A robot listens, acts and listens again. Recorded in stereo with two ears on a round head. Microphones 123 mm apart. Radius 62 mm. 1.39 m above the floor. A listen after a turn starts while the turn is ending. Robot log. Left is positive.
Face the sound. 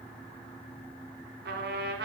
note: The trumpet: about 70° right or 110° right.
cmd yaw -70
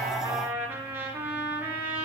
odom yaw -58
note: So it is at 15° right.
cmd yaw -15
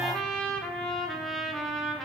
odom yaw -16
end: Found it: a trumpet, straight ahead.